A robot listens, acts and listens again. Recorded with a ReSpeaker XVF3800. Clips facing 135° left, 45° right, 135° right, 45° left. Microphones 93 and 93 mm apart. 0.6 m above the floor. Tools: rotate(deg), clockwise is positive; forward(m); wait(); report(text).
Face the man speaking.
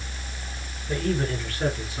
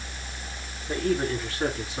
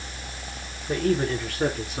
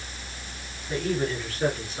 rotate(115)
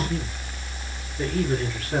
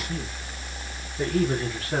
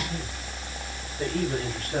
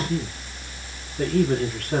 rotate(-15)
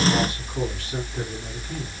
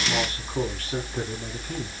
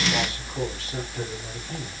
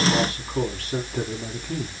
report("Facing the man speaking, over 4 m away.")